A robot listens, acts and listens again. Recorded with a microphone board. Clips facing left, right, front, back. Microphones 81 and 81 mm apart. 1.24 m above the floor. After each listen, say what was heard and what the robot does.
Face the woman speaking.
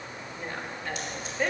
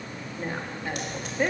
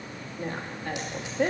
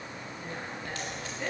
The woman speaking: 10° right. Turn 10° right.
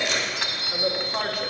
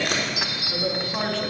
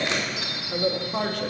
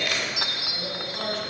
The woman speaking is now 15° left. Turn 15° left.
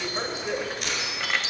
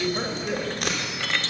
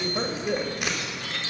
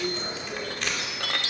The woman speaking is now 10° left. Turn 10° left.
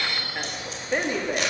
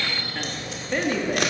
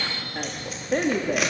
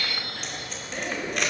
The woman speaking is now 20° left. Turn 20° left.
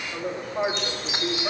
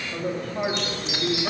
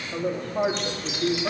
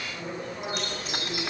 The woman speaking is now 10° left. Turn 10° left.
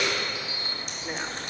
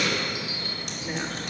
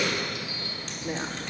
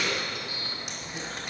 Found it: a woman speaking, straight ahead, 2 to 4 m away.